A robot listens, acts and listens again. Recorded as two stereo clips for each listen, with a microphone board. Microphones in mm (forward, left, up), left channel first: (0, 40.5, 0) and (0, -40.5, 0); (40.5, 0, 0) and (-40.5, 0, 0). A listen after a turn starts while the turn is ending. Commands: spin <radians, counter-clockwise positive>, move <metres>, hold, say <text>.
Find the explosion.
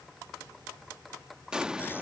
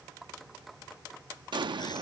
spin -2.97
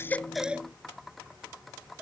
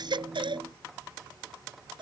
say I heard an explosion from this way, but can't make it out now.